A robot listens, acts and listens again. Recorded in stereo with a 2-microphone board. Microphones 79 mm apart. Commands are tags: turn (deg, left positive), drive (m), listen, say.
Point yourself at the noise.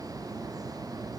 <listen/>
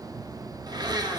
<turn deg="-60"/>
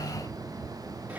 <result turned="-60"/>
<listen/>
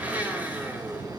<turn deg="-20"/>
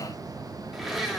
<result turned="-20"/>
<say>Found it: a blender, straight ahead.</say>